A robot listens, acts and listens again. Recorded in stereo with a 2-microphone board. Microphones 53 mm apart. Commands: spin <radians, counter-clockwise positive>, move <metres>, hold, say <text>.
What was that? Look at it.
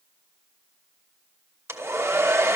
spin -0.96
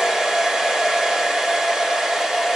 say Found it: a hair dryer, straight ahead, 1 to 2 m away.